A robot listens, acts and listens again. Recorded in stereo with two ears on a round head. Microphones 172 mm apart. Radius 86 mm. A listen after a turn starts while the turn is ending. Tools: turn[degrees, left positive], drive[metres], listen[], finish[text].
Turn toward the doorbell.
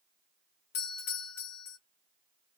Thought: The doorbell: about 50° left or 130° left.
Action: turn[50]
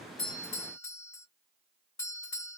Thought: So it is at 15° left.
Action: turn[15]
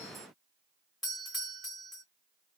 Action: finish[Facing the doorbell, 1 to 2 m away.]